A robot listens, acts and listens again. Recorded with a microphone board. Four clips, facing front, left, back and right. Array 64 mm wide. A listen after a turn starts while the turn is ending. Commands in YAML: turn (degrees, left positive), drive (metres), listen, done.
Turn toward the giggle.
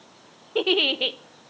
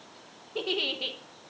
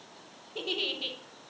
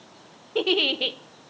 turn: -20
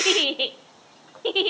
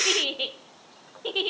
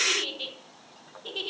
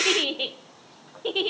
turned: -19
done: "Found it: a giggle, straight ahead."